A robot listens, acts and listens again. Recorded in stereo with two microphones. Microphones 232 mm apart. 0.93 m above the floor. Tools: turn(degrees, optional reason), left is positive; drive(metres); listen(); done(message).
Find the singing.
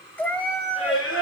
turn(degrees=65, reason="The singing: about 65° left or 115° left.")
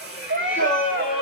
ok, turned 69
turn(degrees=40, reason="So it is at 40° left.")
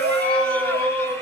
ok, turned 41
turn(degrees=10, reason="The singing is now 10° left.")
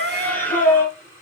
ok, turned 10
turn(degrees=10, reason="The singing is now 10° left.")
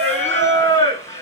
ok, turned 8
turn(degrees=10, reason="The singing is now 10° left.")
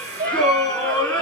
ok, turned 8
done("Facing the singing.")